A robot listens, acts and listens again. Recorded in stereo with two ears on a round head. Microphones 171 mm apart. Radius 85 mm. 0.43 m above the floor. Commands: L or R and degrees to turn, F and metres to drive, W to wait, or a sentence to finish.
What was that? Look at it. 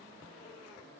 W
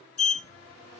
L40
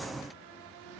W
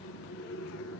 L100
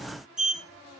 Facing the sliding door, 1 to 2 m away.